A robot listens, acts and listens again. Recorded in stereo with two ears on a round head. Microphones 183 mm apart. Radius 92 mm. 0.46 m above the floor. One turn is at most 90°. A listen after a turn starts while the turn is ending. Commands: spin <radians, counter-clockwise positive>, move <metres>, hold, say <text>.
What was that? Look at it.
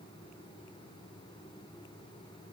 hold
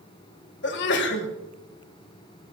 spin 1.05
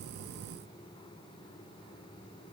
hold
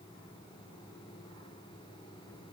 say I heard a sneeze, but can't make it out now. It was about straight ahead or 60° left.